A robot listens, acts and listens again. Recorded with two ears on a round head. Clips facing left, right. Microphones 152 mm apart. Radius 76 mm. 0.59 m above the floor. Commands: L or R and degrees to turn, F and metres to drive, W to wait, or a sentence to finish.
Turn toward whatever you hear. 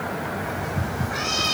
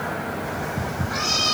R45
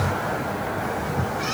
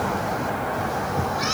W
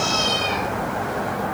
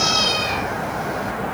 R70
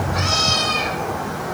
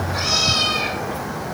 Found it: a cat meowing, straight ahead, 2 to 4 m away.